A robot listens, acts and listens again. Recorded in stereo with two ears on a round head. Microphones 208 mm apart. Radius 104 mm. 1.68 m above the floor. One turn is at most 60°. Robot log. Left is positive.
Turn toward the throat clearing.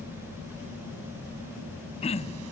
note: The throat clearing: about 30° left or 150° left.
cmd yaw +30
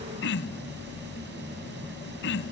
note: So it is at 120° left.
cmd yaw +60
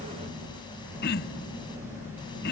note: The throat clearing is now 50° left.
cmd yaw +50
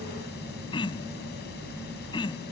note: The throat clearing is now 20° left.
cmd yaw +20
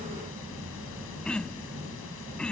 end: Facing the throat clearing.